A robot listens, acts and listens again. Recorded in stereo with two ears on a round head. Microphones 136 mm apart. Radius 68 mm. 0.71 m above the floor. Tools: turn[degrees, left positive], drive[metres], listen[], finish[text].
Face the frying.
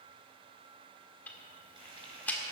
Thought: The frying: about 35° right or 145° right.
Action: turn[-35]
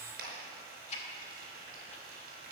Thought: So it is at 110° right.
Action: turn[-110]
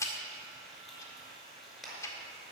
Action: finish[Facing the frying.]